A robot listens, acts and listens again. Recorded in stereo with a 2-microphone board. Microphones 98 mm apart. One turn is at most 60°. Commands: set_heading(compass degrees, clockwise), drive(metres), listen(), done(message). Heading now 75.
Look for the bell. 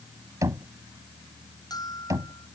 set_heading(30)
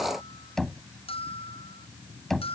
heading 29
set_heading(329)
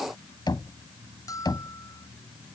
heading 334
set_heading(299)
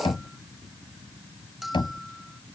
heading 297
done("Found it: a bell, straight ahead.")